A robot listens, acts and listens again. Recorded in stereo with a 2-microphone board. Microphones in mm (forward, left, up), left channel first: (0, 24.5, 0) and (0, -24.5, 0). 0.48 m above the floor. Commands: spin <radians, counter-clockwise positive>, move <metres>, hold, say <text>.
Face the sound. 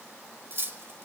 spin -0.87
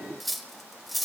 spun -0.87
say Facing the cutlery clinking.